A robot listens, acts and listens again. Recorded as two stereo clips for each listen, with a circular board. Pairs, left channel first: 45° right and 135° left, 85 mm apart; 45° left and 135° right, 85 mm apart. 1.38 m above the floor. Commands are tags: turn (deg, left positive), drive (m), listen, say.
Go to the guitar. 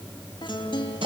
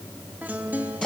<turn deg="-65"/>
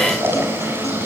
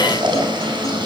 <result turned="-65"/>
<listen/>
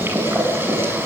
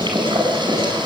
<listen/>
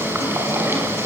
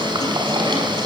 <say>Facing where the guitar came from. I can't hear it now. I did not reach it.</say>